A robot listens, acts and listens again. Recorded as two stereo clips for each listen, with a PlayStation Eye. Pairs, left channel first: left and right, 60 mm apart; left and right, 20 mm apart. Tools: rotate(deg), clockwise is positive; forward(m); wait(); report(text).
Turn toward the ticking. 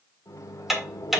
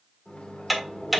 rotate(30)
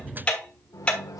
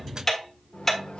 rotate(-20)
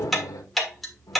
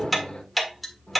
report("Facing the ticking.")